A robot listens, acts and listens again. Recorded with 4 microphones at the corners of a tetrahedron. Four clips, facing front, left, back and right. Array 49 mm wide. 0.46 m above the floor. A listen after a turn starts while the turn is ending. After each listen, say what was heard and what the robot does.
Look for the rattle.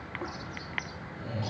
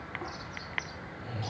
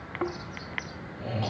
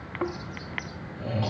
Keep listening.
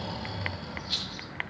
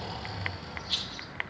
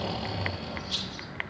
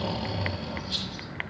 The rattle: 40° left. Turn 40° left.
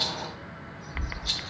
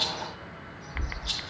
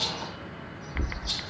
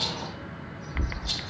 Found it: a rattle, straight ahead.